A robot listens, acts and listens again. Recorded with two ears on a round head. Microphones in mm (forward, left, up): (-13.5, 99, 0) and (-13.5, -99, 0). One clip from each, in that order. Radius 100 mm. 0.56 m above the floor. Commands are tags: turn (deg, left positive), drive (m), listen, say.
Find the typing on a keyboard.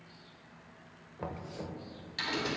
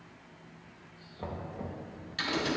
<turn deg="15"/>
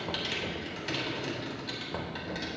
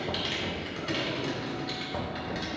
<turn deg="145"/>
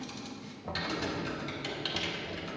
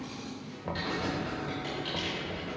<turn deg="50"/>
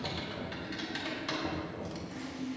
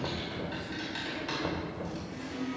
<turn deg="10"/>
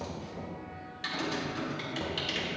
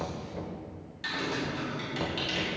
<say>Found it: typing on a keyboard, straight ahead.</say>